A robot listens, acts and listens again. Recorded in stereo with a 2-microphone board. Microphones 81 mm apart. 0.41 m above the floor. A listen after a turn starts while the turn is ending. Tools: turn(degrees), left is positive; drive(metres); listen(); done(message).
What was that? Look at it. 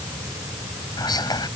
turn(degrees=60)
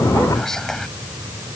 done("Found it: whispering, straight ahead.")